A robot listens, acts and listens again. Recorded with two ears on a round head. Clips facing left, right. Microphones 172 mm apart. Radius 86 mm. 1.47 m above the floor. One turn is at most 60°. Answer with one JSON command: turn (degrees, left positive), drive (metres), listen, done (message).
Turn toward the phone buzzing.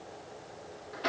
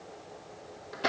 {"listen": true}
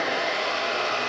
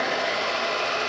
{"listen": true}
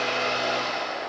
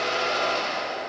{"done": "I can't make out a phone buzzing to turn to."}